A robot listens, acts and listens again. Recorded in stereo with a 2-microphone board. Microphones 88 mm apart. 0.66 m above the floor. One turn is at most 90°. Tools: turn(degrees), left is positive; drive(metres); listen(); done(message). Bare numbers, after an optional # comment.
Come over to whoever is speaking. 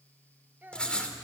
# The child speaking: about 25° right or 155° right.
turn(-25)
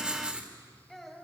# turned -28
drive(1.0)
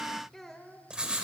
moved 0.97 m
drive(1.0)
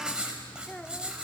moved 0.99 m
# The child speaking is now 15° left.
turn(15)
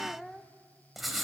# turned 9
drive(1.0)
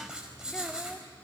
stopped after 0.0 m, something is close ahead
listen()
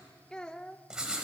# The child speaking is now 10° left.
turn(10)
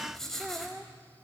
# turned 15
done("Arrived at the child speaking, straight ahead.")